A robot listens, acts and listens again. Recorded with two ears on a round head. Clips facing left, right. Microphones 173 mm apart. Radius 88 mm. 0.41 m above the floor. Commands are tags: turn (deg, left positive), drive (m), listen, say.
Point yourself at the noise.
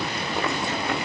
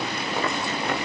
<listen/>
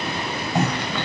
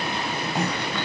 <turn deg="60"/>
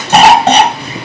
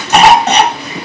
<turn deg="30"/>
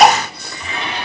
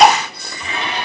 <say>Found it: a cough, straight ahead, 1 to 2 m away.</say>